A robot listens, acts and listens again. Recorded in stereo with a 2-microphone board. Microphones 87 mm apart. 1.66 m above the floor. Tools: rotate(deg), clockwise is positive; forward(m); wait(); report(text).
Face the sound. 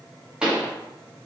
rotate(30)
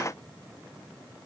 wait()
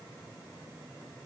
report("I heard a pop, but can't make it out now. It was about 20° left or 140° right.")